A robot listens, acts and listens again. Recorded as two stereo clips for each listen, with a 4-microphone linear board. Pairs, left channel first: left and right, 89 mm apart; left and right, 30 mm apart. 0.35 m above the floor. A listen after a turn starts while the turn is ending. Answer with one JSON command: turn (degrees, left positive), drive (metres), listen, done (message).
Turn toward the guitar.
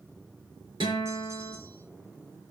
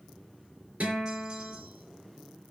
{"turn": -60}
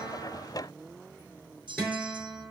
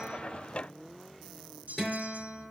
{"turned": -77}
{"turn": 10}
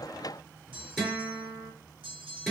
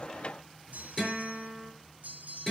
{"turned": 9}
{"done": "Found it: a guitar, straight ahead, over 4 m away."}